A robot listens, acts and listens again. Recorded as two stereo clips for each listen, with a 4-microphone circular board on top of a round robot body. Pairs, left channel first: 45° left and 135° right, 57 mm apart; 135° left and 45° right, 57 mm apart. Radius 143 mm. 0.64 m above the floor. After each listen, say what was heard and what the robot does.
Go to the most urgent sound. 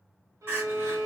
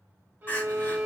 The crying: straight behind. Turn 180° left.
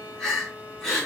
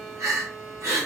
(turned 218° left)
The crying is now 40° right. Turn 40° right.
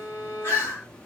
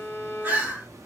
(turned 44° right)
Drive 1.0 m forward.
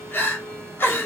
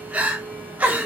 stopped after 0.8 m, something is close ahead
The crying is now 10° left. Turn 10° left.
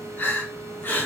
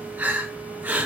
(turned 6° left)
I am next to the crying.